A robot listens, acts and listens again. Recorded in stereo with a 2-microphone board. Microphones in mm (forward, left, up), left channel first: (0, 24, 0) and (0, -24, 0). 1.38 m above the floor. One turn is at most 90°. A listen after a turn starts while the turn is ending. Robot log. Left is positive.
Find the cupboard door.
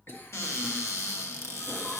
note: The cupboard door: about 75° left or 105° left.
cmd yaw +75
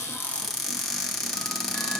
note: So it is at 10° left.
cmd yaw +10
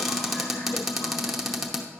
end: Facing the cupboard door.